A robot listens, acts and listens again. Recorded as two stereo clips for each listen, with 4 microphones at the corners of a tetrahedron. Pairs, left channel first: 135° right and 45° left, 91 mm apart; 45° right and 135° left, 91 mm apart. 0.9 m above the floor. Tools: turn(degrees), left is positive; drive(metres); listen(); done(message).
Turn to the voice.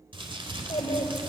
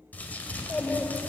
turn(degrees=-130)
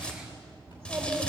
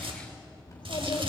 turn(degrees=-20)
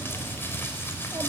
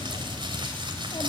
listen()
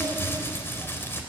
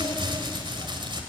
listen()
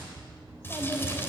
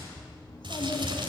turn(degrees=-10)
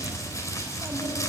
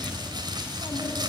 listen()
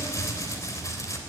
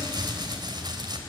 listen()
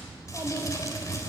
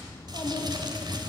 done("Facing the child speaking.")